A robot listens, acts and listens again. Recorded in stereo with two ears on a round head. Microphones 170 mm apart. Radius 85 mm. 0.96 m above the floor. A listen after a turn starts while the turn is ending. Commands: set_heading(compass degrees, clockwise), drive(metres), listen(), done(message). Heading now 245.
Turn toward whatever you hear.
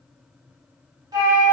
set_heading(265)
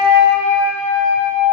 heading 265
set_heading(40)
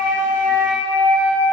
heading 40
set_heading(55)
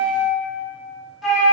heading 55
done("Found it: a flute, straight ahead.")